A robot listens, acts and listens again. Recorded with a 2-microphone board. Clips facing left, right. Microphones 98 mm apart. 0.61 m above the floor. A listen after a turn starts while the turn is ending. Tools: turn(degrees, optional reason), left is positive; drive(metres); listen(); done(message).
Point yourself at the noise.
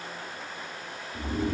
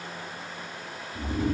turn(degrees=70, reason="The snoring: about 70° left or 110° left.")
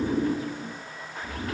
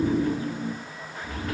turn(degrees=40, reason="So it is at 40° left.")
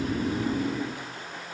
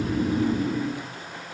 turn(degrees=-10, reason="The snoring is now 10° right.")
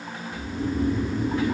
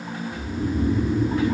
done("Facing the snoring, 2 to 4 m away.")